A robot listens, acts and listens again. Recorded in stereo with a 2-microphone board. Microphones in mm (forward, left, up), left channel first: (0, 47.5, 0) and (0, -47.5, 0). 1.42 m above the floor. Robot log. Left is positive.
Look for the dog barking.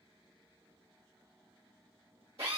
cmd idle
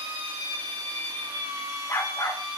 note: The dog barking: about 30° left or 150° left.
cmd yaw +30
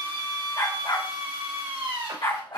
note: So it is at 115° left.
cmd yaw +115
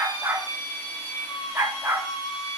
note: The dog barking is now 25° right.
cmd yaw -25
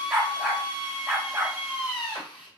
end: Facing the dog barking, 2 to 4 m away.